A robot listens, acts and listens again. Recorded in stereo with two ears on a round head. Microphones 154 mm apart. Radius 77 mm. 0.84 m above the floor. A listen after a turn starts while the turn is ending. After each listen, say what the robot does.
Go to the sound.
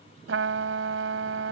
Turn 90° right.
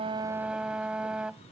Drive 1.0 m forward.
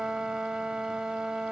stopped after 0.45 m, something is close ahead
Blocked. The trumpet is further on, straight ahead.